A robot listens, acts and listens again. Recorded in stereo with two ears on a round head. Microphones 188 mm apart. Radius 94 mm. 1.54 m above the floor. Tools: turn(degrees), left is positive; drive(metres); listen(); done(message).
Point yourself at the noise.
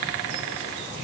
listen()
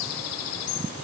listen()
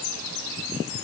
done("I can't make out anything.")